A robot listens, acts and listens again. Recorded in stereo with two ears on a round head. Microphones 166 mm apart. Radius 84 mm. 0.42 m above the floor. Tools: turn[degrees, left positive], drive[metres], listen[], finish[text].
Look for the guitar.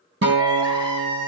Thought: The guitar: about 65° right or 115° right.
Action: turn[-65]
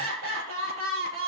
Action: listen[]
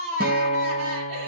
Thought: So it is at 50° right.
Action: turn[-50]
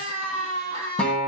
Action: finish[Facing the guitar, 2 to 4 m away.]